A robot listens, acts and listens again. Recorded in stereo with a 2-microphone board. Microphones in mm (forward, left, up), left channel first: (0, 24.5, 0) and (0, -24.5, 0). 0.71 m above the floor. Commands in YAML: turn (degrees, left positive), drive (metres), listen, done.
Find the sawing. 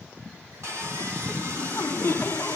turn: -65
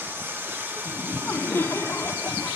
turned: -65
turn: -50
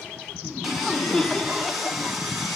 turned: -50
done: "Facing the sawing."